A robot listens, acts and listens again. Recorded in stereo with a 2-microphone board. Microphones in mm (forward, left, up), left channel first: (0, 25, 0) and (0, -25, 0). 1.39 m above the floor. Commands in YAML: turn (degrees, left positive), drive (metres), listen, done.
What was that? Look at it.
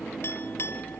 turn: 55
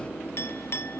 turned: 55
turn: 65
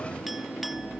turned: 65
listen: true
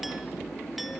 listen: true
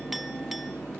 done: "Facing where the clink came from. I can't hear it now."